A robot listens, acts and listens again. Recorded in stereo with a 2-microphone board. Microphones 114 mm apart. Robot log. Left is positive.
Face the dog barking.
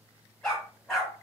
cmd yaw +30
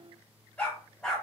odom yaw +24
cmd yaw +30
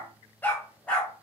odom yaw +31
cmd yaw +30
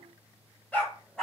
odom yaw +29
cmd yaw +30
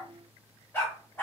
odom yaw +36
note: So it is at 160° left.
cmd yaw +160
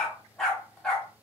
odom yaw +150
end: Found it: a dog barking, straight ahead.